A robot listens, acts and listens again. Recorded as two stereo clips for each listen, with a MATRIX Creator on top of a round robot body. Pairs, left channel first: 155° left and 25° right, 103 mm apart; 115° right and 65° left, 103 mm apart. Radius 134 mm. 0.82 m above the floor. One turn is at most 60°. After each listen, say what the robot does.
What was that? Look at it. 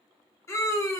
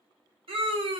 Turn 60° left.
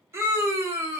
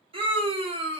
Turn 40° left.
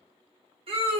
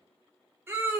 Facing the scream, under 1 m away.